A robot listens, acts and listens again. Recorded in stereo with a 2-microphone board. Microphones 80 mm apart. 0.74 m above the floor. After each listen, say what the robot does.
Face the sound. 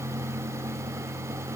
Keep listening.
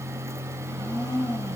Turn 75° left.
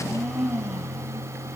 Facing the blender.